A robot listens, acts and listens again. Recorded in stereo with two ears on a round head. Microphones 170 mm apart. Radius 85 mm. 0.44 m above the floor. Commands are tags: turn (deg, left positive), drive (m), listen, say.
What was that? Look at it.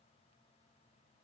<listen/>
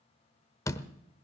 <turn deg="15"/>
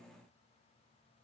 <listen/>
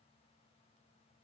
<say>I heard a door slam, but can't make it out now. It was about straight ahead or 150° left.</say>